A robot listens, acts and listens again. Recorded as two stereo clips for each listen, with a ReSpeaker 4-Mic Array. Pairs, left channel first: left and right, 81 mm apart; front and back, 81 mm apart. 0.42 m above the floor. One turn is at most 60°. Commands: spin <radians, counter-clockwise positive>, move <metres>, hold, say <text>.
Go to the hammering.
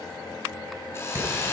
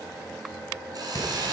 spin -0.61
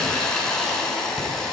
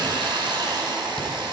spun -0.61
hold
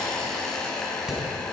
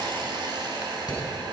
spin -0.17
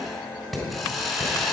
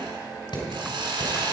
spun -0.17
move 1.0
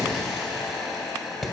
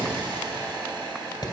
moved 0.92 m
move 1.0
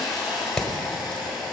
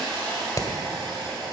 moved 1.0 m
move 1.0
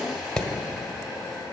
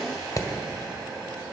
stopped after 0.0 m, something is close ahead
spin 0.17
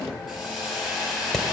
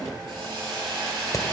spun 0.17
say I am next to the hammering.